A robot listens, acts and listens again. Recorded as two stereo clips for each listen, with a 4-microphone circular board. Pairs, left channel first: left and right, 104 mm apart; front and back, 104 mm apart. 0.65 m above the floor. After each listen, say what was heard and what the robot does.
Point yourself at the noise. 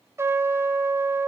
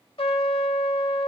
The trumpet: 25° right. Turn 25° right.
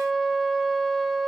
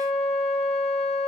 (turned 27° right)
Facing the trumpet.